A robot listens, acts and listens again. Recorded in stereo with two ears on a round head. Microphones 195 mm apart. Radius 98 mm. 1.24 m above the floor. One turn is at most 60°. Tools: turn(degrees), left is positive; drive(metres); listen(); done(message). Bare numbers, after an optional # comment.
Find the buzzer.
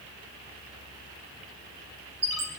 listen()
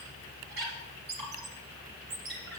listen()
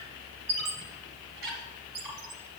done("I can't make out a buzzer to turn to.")